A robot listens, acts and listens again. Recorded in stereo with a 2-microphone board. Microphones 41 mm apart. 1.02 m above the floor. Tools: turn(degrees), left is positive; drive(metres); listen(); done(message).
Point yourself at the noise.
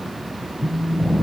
turn(degrees=45)
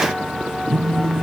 done("Found it: a phone buzzing, straight ahead.")